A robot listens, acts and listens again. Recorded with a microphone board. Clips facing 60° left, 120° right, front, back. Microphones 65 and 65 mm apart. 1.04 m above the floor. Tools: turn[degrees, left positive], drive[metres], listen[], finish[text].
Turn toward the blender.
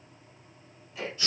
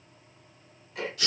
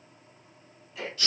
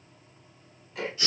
Action: listen[]
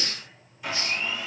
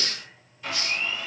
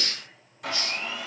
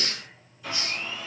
Thought: The blender: 20° right.
Action: turn[-20]
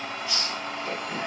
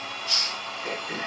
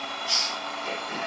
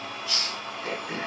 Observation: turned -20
Action: finish[Facing the blender.]